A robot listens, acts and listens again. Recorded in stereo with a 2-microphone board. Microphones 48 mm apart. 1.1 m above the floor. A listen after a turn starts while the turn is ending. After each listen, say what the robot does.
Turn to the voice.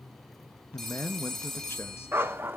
Turn 55° left.
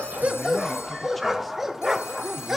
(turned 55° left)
Keep listening.
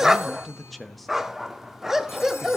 Facing the man speaking.